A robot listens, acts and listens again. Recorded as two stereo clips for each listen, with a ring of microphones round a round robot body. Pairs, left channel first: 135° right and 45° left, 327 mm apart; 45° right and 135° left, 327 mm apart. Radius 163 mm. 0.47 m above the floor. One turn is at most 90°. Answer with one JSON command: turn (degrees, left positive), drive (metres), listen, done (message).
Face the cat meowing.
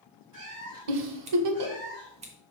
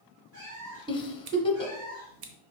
{"turn": 90}
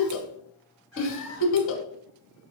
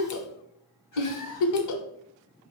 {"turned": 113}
{"turn": -10}
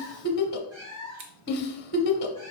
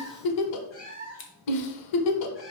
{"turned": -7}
{"turn": 10}
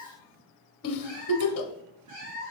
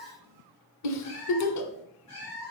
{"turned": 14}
{"done": "Found it: a cat meowing, straight ahead, over 4 m away."}